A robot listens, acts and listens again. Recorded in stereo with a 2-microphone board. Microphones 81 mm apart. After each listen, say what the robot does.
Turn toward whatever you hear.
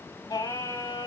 Turn 65° left.
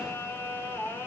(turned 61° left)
Turn 20° left.
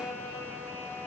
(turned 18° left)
Facing the singing, 2 to 4 m away.